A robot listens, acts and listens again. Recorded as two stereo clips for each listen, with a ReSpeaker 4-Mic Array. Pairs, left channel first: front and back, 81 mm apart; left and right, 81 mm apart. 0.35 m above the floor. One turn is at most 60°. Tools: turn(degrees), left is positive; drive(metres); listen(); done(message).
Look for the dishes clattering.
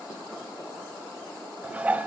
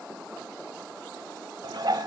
turn(degrees=-60)
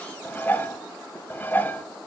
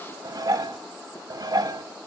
turn(degrees=-60)
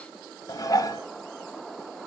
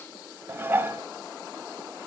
turn(degrees=-30)
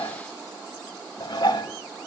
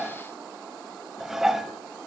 done("Found it: dishes clattering, straight ahead.")